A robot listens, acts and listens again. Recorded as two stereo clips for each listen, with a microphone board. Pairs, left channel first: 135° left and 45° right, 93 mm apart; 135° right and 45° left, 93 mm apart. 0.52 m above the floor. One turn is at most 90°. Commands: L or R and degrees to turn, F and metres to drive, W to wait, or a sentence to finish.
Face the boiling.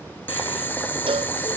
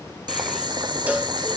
L70
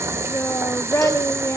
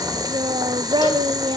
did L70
L10
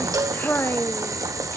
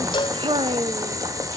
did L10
Facing the boiling.